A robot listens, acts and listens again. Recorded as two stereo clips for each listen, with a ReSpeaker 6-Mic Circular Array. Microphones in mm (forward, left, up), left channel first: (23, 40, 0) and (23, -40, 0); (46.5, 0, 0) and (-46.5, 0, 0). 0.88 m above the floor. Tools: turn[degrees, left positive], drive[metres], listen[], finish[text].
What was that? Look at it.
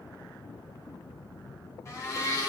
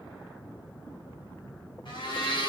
Thought: The blender: 35° left.
Action: turn[35]
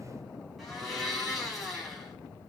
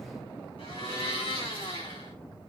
Action: finish[Facing the blender, over 4 m away.]